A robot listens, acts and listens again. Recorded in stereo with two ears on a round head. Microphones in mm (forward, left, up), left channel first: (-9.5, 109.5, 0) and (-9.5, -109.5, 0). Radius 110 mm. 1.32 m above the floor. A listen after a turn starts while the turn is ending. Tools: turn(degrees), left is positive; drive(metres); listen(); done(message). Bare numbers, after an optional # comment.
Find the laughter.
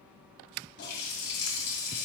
listen()
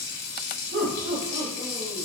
# The laughter: about 35° right or 145° right.
turn(-35)
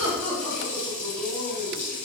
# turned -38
# So it is at 15° left.
turn(15)
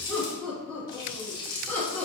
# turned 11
done("Facing the laughter.")